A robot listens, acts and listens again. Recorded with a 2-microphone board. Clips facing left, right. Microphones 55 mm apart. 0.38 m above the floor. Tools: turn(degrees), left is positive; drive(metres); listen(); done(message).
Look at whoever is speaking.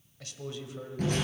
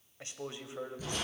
turn(degrees=-25)
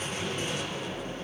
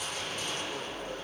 listen()
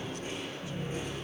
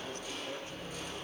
listen()
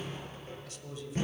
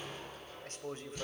turn(degrees=-125)
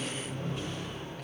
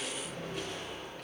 listen()
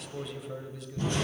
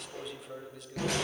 done("Found it: a man speaking, straight ahead.")